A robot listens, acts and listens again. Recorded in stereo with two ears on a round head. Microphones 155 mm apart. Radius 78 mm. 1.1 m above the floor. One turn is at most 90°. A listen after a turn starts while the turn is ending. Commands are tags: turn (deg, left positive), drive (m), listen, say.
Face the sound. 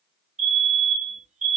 <turn deg="-40"/>
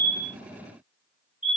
<turn deg="-10"/>
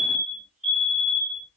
<say>Found it: a fire alarm, straight ahead.</say>